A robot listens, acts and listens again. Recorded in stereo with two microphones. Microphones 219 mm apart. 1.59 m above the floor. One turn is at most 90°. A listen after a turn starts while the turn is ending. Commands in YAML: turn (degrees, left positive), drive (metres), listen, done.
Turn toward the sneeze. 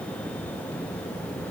listen: true
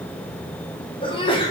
turn: 25
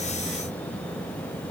listen: true
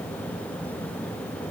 done: "I heard a sneeze, but can't make it out now. It was about straight ahead or 130° left."